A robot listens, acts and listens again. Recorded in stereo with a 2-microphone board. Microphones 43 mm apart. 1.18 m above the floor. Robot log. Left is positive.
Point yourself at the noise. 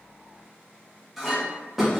cmd yaw -30
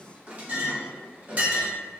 note: So it is at 145° right.
cmd yaw -145
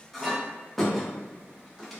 end: Found it: a clink, straight ahead, under 1 m away.